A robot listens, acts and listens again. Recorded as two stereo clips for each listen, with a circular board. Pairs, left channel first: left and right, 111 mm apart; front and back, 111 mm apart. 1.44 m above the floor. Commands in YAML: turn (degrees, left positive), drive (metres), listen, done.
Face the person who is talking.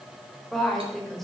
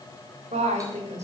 turn: 175
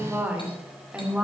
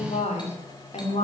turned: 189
turn: -10
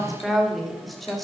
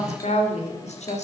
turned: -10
done: "Facing the woman speaking."